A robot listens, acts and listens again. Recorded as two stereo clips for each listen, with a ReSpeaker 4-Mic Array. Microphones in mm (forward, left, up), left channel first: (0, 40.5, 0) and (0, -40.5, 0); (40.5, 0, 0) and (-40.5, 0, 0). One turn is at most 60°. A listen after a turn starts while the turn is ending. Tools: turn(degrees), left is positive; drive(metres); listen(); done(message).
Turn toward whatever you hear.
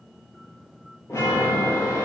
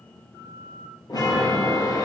turn(degrees=40)
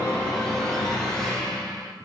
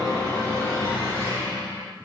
turn(degrees=10)
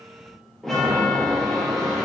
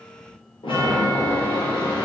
done("Facing the chime.")